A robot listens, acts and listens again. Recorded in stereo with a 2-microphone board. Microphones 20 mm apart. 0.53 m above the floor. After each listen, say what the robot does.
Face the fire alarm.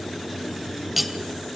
Keep listening.
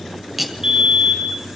Turn 45° right.
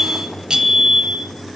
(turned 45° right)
Turn 10° right.
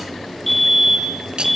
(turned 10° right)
Found it: a fire alarm, straight ahead.